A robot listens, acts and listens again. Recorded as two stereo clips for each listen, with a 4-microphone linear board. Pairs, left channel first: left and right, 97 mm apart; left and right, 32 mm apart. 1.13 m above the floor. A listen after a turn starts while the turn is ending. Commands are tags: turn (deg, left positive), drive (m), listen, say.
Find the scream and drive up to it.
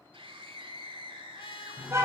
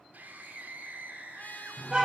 <turn deg="-90"/>
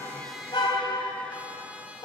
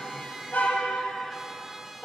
<listen/>
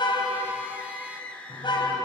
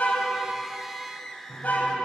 <turn deg="10"/>
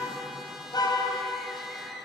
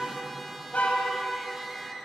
<listen/>
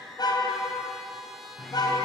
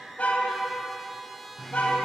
<listen/>
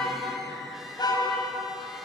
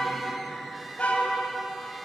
<say>Facing where the scream came from. I can't hear it now. I did not reach it.</say>